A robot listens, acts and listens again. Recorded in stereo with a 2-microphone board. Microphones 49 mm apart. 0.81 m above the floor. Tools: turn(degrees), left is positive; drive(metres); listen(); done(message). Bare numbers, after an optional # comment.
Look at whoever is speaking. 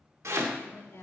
# The woman speaking: about 70° left or 110° left.
turn(70)
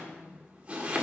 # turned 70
listen()
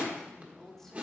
# So it is at 10° left.
turn(10)
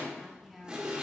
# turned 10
done("Found it: a woman speaking, straight ahead, 1 to 2 m away.")